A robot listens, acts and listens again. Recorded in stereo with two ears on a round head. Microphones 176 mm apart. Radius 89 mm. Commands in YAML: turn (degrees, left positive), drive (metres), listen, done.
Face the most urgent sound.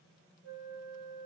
listen: true
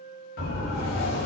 turn: 50
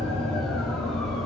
done: "Found it: a siren, straight ahead, over 4 m away."